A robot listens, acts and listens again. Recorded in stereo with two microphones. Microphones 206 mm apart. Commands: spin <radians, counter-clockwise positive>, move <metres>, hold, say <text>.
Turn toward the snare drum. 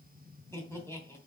hold
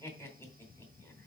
hold
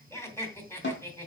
spin 1.05
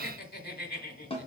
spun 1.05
spin 0.61
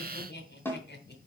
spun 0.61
spin 0.17
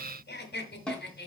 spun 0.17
say Facing the snare drum.